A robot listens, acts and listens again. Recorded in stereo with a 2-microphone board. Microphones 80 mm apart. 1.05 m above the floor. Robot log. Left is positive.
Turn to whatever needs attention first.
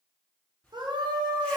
note: The scream: about 70° right or 110° right.
cmd yaw -70
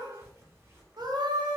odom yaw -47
note: So it is at 60° right.
cmd yaw -60
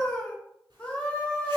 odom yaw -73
note: The scream is now 15° left.
cmd yaw +15
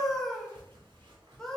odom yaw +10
end: Found it: a scream, straight ahead.